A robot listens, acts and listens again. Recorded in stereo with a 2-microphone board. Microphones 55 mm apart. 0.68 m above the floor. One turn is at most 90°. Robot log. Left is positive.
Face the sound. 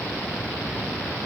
cmd idle
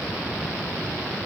cmd idle
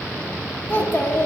note: The child speaking: about 35° left or 145° left.
cmd yaw +35
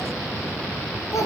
note: So it is at 110° left.
cmd yaw +90
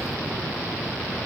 note: Nothing new. It was at 20° left.
cmd yaw +20
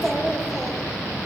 end: Found it: a child speaking, straight ahead.